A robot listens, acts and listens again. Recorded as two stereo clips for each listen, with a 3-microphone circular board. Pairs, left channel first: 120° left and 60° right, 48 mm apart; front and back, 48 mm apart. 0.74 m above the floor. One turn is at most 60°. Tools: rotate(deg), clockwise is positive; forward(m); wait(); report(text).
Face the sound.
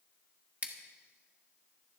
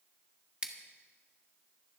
rotate(60)
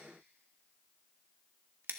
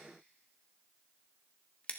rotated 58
rotate(55)
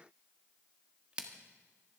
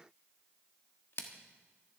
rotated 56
report("Found it: scissors, straight ahead, 1 to 2 m away.")